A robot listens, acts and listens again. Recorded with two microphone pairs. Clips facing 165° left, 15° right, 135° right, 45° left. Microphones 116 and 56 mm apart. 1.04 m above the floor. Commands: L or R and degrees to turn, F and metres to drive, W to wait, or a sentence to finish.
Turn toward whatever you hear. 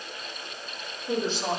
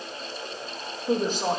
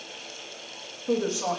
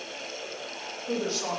R55
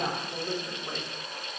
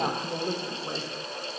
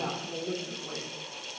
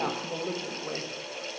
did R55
L45
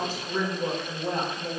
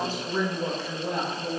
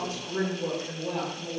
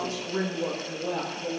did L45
L70
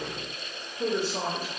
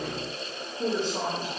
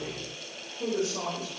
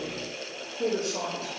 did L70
L60
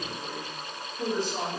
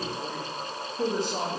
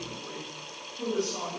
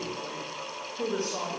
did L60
R10
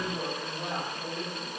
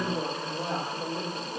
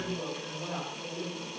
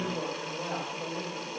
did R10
Facing the woman speaking, 2 to 4 m away.